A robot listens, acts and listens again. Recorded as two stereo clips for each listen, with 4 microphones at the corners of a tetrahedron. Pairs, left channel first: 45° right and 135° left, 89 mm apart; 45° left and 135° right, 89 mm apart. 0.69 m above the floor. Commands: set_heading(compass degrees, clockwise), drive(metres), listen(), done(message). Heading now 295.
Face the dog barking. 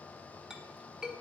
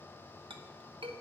listen()
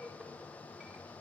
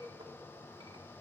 listen()
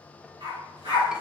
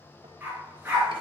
set_heading(140)
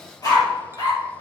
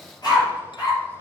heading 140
done("Facing the dog barking, over 4 m away.")